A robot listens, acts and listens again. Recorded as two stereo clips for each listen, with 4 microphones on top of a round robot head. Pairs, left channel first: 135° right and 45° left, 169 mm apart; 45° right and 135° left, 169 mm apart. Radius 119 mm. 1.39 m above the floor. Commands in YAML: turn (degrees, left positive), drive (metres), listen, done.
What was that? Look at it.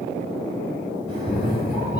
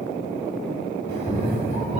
turn: -170
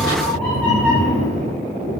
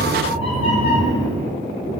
turn: -60
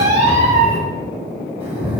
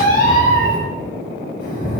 turn: -15
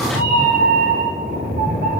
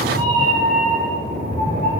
done: "Found it: a cat meowing, straight ahead."